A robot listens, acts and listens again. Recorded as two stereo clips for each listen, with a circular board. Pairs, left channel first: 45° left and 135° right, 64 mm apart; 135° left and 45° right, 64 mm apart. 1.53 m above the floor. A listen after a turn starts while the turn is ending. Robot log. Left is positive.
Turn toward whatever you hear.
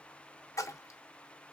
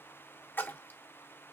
note: The splash: 80° left.
cmd yaw +80
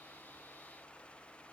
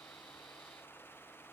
end: Facing where the splash came from. I can't hear it now.